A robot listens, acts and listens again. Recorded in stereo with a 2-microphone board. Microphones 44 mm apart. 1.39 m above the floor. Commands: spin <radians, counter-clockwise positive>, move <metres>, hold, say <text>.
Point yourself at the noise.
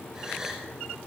spin -0.52
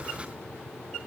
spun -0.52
hold
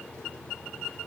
say I heard a gasp, but can't make it out now. It was about 15° left or 135° right.